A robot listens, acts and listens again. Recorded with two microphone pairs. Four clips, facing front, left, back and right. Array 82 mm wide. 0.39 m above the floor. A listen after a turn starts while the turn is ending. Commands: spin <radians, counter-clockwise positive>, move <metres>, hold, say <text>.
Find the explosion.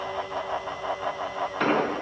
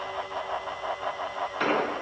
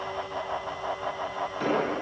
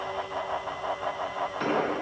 spin 0.44
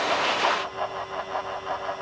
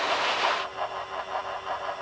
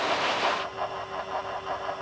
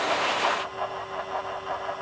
say I heard an explosion from this way, but can't make it out now.